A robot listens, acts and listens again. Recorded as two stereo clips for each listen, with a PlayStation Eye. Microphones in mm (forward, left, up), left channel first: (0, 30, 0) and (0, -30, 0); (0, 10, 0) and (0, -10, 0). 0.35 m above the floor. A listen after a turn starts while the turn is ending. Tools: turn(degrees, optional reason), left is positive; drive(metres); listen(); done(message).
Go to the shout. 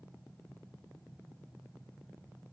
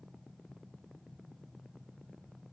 listen()
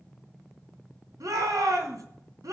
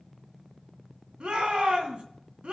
turn(degrees=-70, reason="The shout: about 70° right or 110° right.")
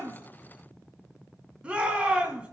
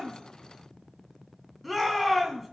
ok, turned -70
turn(degrees=-20, reason="So it is at 20° right.")
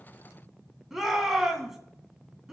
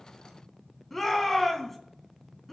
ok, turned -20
drive(metres=1.0)
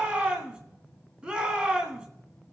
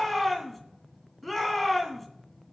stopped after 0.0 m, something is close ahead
turn(degrees=-15, reason="The shout is now 15° right.")
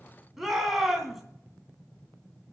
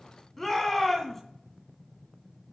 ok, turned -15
done("Blocked. The shout is further on, straight ahead.")